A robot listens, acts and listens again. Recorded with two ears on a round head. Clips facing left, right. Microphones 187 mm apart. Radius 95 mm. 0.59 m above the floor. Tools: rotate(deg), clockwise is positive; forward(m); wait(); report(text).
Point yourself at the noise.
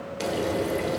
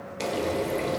rotate(-30)
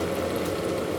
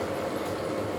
rotate(-145)
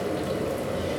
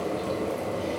rotate(-15)
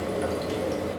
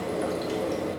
report("Found it: frying, straight ahead, under 1 m away.")